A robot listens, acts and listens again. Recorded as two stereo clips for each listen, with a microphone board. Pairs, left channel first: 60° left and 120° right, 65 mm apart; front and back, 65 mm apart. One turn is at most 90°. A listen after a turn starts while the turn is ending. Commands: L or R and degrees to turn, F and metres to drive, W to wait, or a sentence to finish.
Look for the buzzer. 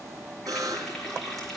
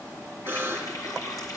R90
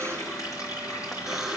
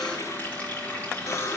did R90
R35
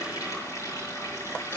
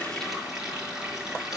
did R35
W
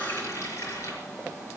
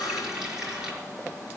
W
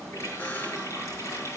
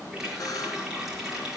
Facing where the buzzer came from. I can't hear it now.